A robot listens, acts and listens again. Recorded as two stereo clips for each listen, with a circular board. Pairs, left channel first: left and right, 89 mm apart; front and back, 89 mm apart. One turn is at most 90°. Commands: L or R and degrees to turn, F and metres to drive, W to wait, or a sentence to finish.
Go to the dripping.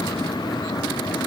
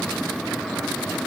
W
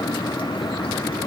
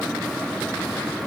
W
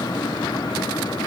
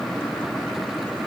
I can't make out dripping to turn to.